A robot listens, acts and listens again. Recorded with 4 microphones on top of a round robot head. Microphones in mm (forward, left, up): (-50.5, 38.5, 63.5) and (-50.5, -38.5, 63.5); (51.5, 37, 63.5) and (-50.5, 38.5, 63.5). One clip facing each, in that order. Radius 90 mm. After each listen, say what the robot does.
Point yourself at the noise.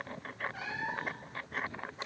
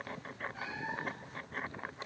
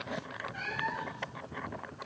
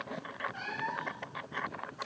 Turn 115° left.
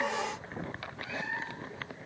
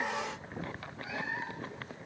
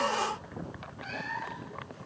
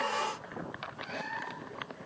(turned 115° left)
Facing the cat meowing.